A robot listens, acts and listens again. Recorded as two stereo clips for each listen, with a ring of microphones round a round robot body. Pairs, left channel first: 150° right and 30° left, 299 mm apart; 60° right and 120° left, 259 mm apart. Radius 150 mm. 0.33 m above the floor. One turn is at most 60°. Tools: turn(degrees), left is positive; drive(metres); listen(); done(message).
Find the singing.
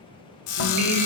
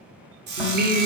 turn(degrees=60)
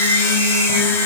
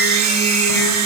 turn(degrees=25)
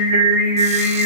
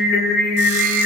done("Facing the singing, 1 to 2 m away.")